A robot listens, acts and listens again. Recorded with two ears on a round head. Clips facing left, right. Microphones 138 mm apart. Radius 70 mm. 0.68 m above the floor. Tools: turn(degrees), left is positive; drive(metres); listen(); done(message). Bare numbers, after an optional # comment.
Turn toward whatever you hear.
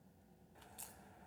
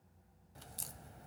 # The crack: about 45° right or 135° right.
turn(-45)
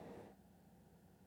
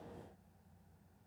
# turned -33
listen()
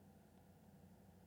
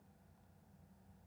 done("I heard a crack, but can't make it out now. It was about 15° right or 100° right.")